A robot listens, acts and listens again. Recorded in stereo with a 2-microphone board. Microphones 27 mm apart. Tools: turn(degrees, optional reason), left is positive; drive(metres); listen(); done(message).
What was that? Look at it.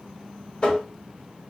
turn(degrees=35, reason="The tapping: about 35° left or 145° left.")
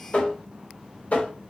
turn(degrees=110, reason="So it is at 110° left.")
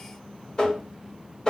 turn(degrees=30, reason="The tapping is now 30° left.")
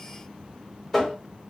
turn(degrees=10, reason="The tapping is now 10° left.")
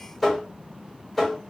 done("Facing the tapping, 1 to 2 m away.")